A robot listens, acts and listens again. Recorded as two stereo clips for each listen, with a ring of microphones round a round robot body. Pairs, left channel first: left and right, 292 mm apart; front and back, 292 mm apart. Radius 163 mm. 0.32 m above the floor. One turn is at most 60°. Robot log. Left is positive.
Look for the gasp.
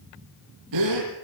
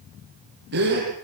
note: The gasp: 120° right.
cmd yaw -60
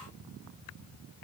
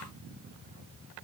note: Nothing new. It was at 60° right.
cmd yaw -60
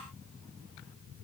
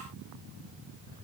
end: I heard a gasp from this way, but can't make it out now.